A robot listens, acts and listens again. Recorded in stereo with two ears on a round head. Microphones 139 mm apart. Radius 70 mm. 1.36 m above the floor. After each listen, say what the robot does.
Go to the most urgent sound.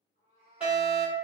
Turn 30° right.
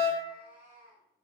Turn 20° left.
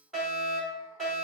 Drive 1.0 m forward.
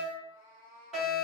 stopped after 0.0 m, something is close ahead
Something is in my way. I am facing the fire alarm but have not reached it.